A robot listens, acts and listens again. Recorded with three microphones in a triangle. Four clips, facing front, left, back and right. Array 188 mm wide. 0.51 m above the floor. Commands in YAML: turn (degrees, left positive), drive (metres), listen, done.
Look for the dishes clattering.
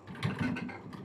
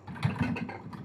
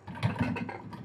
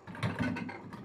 turn: 170
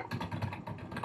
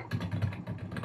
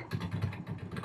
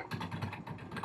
listen: true
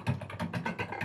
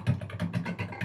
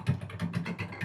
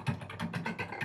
done: "Found it: dishes clattering, straight ahead."